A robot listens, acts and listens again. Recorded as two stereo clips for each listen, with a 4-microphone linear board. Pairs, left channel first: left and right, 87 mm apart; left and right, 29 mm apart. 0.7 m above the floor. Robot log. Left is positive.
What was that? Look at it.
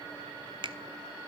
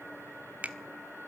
note: The finger snap: about 70° right or 110° right.
cmd yaw -70
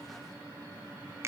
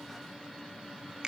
note: So it is at 35° right.
cmd yaw -35
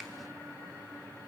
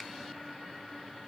cmd idle
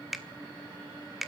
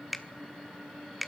end: Found it: a finger snap, straight ahead, 1 to 2 m away.